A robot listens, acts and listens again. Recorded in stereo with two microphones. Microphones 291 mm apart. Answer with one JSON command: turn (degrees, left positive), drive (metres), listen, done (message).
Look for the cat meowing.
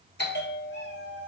{"turn": -55}
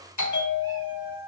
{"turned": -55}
{"turn": -15}
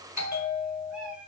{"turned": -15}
{"done": "Facing the cat meowing, 2 to 4 m away."}